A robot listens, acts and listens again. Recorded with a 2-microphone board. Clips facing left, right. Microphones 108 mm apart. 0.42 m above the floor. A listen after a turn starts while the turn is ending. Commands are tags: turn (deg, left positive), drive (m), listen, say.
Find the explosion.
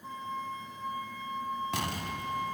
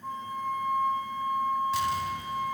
<turn deg="70"/>
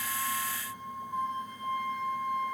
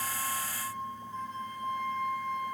<listen/>
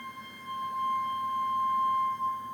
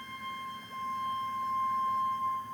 <say>I heard an explosion, but can't make it out now. It was about straight ahead or 40° left.</say>